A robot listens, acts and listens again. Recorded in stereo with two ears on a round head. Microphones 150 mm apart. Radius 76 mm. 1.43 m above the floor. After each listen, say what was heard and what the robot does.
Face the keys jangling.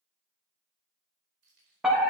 The keys jangling: about 75° right or 105° right. Turn 75° right.
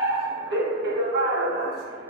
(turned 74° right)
Keep listening.
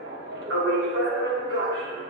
Keep listening.
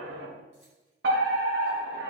I heard keys jangling, but can't make it out now. It was about straight ahead or 30° right.